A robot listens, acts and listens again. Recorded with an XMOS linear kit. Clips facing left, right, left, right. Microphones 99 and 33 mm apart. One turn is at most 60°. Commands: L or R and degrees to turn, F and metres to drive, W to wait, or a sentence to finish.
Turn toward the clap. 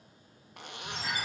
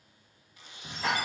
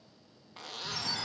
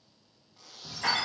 R60
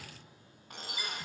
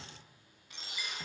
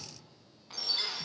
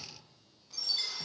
R30
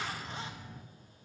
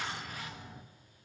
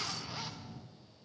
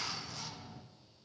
R15
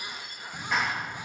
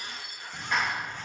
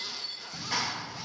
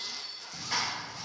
Found it: a clap, straight ahead, 1 to 2 m away.